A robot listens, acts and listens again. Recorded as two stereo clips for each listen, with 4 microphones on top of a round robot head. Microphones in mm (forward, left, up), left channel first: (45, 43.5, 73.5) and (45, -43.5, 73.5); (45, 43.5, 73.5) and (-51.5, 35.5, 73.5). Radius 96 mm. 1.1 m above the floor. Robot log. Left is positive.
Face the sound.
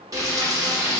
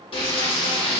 note: The frying: 45° right.
cmd yaw -45
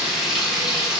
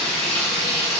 note: The frying is now 10° right.
cmd yaw -10
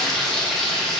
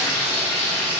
end: Found it: frying, straight ahead, 1 to 2 m away.